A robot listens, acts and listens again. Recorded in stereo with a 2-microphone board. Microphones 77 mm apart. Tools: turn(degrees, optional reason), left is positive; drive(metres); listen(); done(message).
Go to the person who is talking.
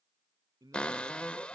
turn(degrees=-60, reason="The man speaking: about 60° right or 120° right.")
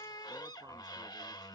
listen()
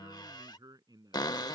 turn(degrees=-60, reason="So it is at 60° right.")
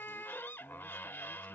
listen()
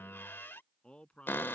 turn(degrees=15, reason="The man speaking is now 15° left.")
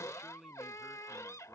drive(metres=1.0)
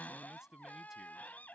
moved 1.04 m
drive(metres=1.0)
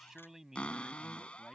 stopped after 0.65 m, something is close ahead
done("Blocked. The man speaking is further on, straight ahead.")